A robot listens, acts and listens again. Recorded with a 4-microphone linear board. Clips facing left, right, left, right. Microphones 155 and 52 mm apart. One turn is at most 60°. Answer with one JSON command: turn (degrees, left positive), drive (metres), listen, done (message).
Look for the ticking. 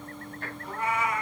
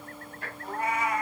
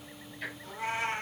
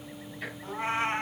{"turn": -30}
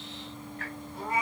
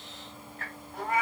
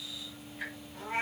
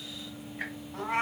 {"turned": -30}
{"turn": -60}
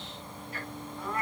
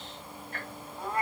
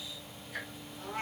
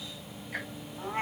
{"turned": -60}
{"turn": -60}
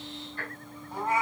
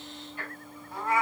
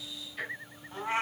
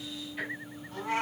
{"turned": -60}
{"turn": -10}
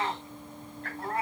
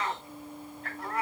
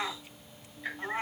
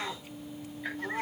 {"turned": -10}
{"done": "Facing the ticking."}